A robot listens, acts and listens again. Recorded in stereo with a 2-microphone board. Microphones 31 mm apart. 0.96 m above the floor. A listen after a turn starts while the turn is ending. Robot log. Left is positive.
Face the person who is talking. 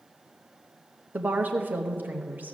note: The woman speaking: about 65° right or 115° right.
cmd yaw -65
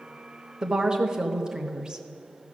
note: So it is at 25° right.
cmd yaw -25
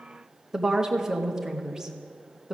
note: The woman speaking is now 20° right.
cmd yaw -20
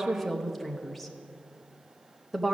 end: Found it: a woman speaking, straight ahead, under 1 m away.